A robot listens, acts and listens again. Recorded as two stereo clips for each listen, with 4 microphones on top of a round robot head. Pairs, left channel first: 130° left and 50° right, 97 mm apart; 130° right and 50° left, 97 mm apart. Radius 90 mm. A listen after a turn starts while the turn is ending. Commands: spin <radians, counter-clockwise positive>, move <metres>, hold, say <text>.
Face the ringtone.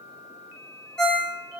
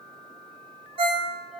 spin 0.79
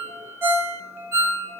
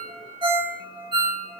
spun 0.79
spin 0.26
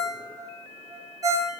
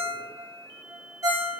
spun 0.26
say Facing the ringtone, under 1 m away.